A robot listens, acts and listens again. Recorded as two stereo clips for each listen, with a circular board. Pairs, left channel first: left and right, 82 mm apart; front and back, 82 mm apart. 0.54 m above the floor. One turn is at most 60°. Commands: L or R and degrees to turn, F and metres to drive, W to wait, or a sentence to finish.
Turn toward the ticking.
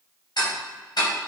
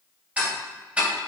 L60
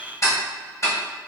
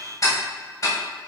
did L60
L45
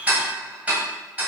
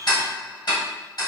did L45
R20
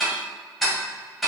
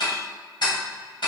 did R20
Facing the ticking.